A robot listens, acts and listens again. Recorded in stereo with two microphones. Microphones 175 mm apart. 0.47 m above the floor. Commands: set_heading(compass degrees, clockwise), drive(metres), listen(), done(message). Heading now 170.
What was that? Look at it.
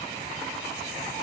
listen()
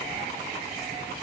listen()
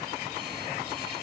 done("I can't make out anything.")